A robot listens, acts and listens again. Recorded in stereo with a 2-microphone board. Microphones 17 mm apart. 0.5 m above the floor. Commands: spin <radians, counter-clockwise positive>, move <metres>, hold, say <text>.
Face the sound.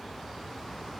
hold
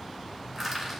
spin -0.52
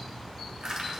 spin -2.36
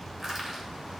spin -0.44
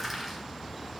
spin -0.17
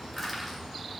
say Facing the crushing, 2 to 4 m away.